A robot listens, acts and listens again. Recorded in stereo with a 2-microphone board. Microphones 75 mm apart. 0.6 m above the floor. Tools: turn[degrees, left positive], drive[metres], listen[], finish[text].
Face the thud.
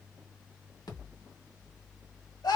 Thought: The thud: about 65° left or 115° left.
Action: turn[65]
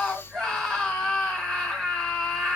Action: listen[]
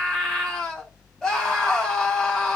Action: finish[I heard a thud, but can't make it out now. It was about straight ahead or 50° left.]